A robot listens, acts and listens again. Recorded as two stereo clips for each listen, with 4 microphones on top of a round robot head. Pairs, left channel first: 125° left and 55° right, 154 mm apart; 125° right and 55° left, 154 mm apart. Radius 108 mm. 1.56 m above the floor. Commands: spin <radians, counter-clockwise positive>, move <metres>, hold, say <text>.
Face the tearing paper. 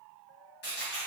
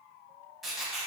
spin 2.53
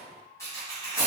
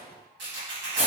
spin 0.87
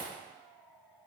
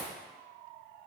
hold
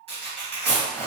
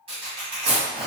say Found it: tearing paper, straight ahead.